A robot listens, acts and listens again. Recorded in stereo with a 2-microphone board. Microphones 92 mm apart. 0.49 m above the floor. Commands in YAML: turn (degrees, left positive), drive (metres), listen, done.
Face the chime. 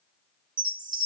turn: -55
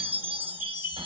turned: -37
turn: -20
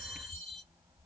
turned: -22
done: "Facing the chime, 1 to 2 m away."